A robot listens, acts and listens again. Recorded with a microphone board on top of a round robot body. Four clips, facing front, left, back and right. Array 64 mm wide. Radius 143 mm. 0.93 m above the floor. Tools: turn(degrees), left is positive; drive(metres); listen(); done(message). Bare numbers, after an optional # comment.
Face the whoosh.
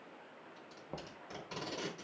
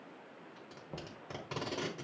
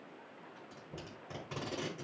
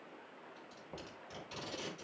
listen()
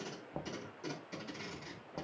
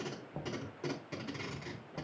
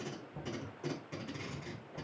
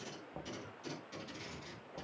listen()
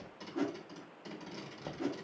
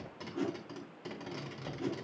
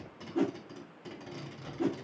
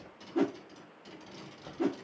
# The whoosh: 105° right.
turn(-105)
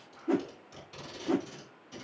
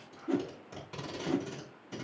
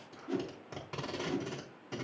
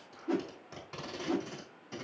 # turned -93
# The whoosh is now 10° right.
turn(-10)
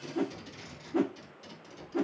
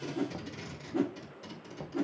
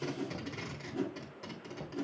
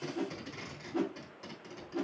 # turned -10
done("Found it: a whoosh, straight ahead.")